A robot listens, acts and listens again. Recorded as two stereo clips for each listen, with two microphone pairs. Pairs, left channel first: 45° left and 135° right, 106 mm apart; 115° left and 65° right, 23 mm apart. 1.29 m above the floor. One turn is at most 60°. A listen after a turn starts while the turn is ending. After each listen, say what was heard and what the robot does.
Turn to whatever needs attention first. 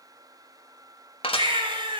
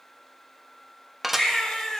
The baby crying: 175° right. Turn 60° right.
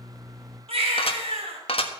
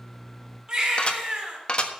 The baby crying is now 120° right. Turn 60° right.
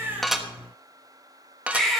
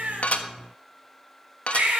The baby crying is now 45° right. Turn 45° right.
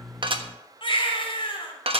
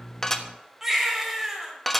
The baby crying is now 10° left. Turn 10° left.
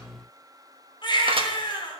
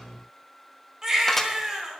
Facing the baby crying.